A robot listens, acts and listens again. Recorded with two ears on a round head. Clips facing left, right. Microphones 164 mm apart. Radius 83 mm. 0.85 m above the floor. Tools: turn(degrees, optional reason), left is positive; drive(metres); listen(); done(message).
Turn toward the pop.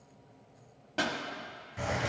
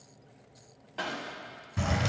turn(degrees=60, reason="The pop: about 60° left or 120° left.")
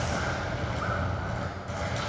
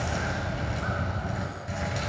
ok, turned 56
listen()
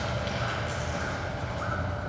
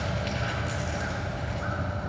done("I heard a pop, but can't make it out now. It was about straight ahead or 65° left.")